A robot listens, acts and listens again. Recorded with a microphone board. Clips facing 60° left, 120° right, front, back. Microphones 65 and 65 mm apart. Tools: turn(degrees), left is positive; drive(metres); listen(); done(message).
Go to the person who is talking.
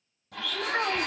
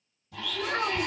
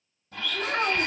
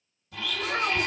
drive(metres=1.0)
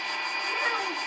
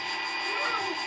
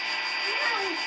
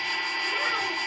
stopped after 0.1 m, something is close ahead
listen()
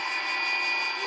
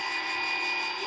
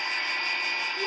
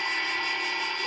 listen()
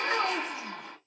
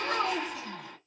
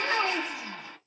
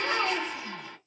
done("Blocked. The child speaking is further on, straight ahead.")